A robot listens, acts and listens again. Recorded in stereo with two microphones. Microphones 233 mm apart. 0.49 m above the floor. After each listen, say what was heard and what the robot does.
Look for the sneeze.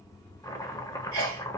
The sneeze: about 60° left or 120° left. Turn 60° left.
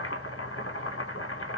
Keep listening.
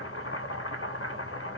I heard a sneeze, but can't make it out now. It was about straight ahead or 60° left.